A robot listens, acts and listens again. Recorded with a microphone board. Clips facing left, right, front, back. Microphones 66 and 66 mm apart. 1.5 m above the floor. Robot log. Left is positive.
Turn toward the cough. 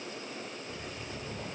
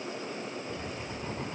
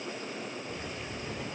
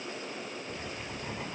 cmd idle
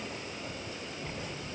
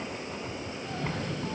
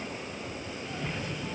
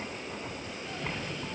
note: The cough: 85° right.
cmd yaw -85
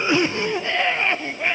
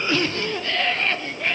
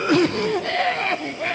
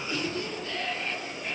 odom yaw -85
note: The cough is now 20° left.
cmd yaw +20
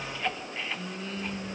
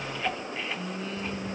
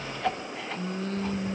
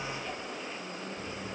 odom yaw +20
end: Found it: a cough, straight ahead.